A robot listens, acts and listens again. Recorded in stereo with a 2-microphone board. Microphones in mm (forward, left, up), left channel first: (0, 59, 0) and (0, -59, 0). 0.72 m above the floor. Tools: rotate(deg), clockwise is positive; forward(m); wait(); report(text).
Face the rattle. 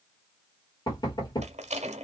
rotate(75)
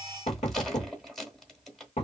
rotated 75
report("Facing the rattle.")